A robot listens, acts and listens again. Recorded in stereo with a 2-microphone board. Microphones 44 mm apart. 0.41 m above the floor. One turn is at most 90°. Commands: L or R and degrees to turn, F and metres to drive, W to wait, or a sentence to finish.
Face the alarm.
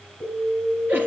R50
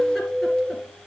R70
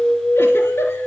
R15
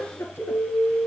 Found it: an alarm, straight ahead.